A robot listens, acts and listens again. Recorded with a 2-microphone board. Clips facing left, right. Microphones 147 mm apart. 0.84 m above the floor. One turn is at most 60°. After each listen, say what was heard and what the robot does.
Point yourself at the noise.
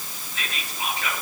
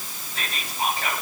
The whispering: about 35° right or 145° right. Turn 35° right.
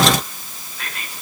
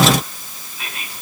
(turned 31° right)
Facing the whispering.